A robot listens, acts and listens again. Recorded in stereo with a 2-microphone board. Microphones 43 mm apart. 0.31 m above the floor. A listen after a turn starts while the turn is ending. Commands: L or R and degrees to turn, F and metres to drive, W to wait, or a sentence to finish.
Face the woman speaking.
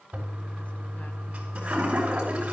W
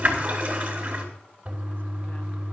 W
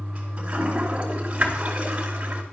I can't make out a woman speaking, only a toilet flushing.